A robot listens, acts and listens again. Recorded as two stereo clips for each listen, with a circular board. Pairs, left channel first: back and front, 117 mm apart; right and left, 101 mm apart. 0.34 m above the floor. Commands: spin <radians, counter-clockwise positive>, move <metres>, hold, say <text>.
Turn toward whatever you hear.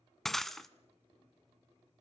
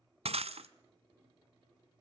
spin 1.66
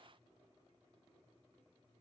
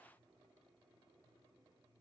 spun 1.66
say Facing where the breaking glass came from. I can't hear it now.